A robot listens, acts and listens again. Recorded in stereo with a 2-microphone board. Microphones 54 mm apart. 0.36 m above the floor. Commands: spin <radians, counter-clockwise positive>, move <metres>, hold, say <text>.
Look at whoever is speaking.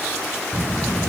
spin 0.52
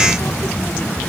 spin 2.44
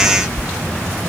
spin -0.52
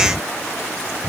say Facing the child speaking.